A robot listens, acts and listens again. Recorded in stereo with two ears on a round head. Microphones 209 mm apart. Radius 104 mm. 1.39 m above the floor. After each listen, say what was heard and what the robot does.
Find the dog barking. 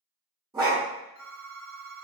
The dog barking: about 15° right or 165° right. Turn 15° right.
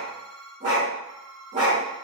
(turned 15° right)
So it is at 150° right. Turn 150° right.
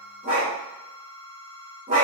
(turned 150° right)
The dog barking is now 40° right. Turn 40° right.
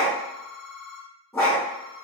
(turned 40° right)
The dog barking is now 15° left. Turn 15° left.
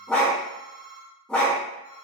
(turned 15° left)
Facing the dog barking, 1 to 2 m away.